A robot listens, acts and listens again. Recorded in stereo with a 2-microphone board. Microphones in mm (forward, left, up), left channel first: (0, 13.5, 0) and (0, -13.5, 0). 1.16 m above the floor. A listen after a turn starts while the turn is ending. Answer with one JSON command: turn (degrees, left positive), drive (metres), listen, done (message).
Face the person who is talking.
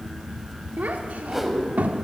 {"turn": -90}
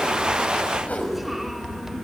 {"listen": true}
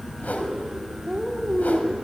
{"done": "Facing the child speaking, 2 to 4 m away."}